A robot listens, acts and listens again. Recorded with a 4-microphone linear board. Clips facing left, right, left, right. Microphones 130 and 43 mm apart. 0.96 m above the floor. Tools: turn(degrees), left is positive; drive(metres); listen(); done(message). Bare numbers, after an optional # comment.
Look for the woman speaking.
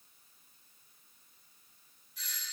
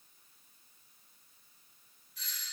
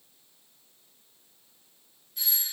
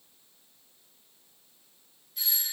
listen()
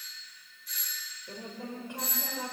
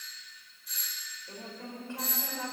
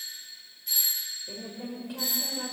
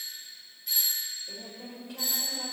turn(30)
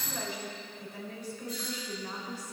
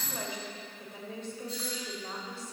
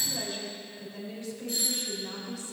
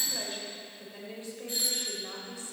# So it is at 25° right.
turn(-25)
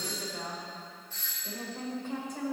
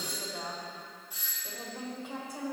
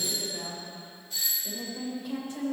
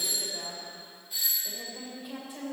# The woman speaking is now 10° right.
turn(-10)
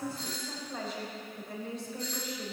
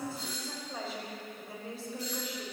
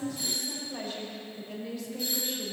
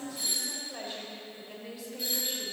done("Found it: a woman speaking, straight ahead.")